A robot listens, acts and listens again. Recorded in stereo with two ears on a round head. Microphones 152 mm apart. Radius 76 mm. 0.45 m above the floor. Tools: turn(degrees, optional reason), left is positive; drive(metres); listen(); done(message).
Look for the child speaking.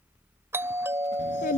turn(degrees=50, reason="The child speaking: about 50° left or 130° left.")
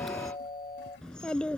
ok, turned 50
done("Facing the child speaking.")